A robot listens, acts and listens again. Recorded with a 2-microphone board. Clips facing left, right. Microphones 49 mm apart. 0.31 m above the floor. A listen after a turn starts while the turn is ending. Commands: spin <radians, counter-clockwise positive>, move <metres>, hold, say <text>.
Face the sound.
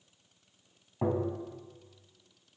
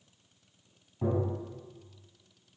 spin 0.79
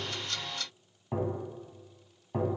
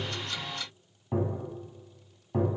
say Found it: tapping, straight ahead.